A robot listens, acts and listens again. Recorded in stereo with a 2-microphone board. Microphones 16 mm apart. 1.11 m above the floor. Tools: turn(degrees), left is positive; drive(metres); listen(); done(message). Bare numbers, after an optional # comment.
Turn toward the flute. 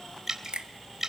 listen()
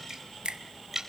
listen()
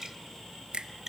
done("I can't make out a flute, only a finger snap and dripping.")